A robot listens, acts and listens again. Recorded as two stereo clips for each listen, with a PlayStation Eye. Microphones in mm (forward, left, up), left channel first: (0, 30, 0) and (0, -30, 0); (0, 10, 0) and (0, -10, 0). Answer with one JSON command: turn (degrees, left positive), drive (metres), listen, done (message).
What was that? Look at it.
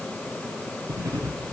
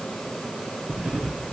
{"turn": -90}
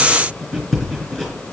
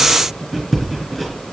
{"done": "Found it: writing, straight ahead."}